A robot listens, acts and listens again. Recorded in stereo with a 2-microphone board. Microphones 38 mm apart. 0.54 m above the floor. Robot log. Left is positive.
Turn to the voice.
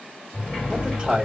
note: The man speaking: about 20° right or 160° right.
cmd yaw -20
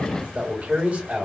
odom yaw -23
note: So it is at 135° right.
cmd yaw -135
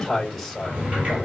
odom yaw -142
end: Found it: a man speaking, straight ahead.